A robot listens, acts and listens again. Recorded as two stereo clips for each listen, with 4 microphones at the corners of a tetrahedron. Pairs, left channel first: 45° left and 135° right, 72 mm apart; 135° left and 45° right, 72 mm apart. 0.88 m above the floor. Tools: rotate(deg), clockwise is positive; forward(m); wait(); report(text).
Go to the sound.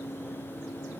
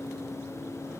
wait()
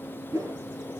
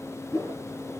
rotate(-180)
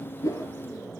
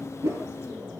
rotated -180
forward(1.0)
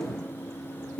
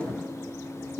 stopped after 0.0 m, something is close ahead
report("Something is in my way. I am facing the whoosh but have not reached it.")